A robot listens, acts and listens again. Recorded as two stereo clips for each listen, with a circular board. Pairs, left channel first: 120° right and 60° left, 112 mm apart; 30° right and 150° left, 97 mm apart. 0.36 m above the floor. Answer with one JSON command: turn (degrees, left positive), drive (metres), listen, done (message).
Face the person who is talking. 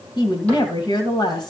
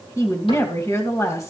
{"turn": -80}
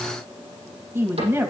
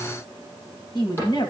{"done": "Facing the woman speaking."}